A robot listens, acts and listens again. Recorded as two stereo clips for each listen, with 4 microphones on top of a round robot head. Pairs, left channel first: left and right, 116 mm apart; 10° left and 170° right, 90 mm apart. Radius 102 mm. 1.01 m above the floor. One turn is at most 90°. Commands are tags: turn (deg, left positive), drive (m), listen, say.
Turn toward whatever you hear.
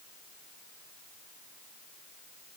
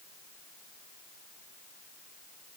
<listen/>
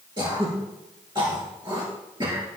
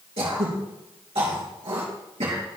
<turn deg="-90"/>
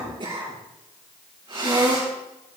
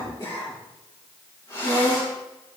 <turn deg="-45"/>
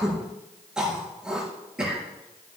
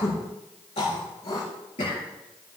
<say>Facing the throat clearing.</say>